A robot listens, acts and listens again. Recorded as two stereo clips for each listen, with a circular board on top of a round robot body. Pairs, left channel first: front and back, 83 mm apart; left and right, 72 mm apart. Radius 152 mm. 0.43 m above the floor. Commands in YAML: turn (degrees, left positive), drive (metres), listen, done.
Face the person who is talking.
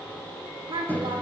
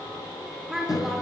turn: -175
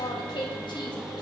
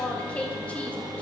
turn: 20
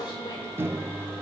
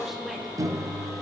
done: "Found it: a woman speaking, straight ahead."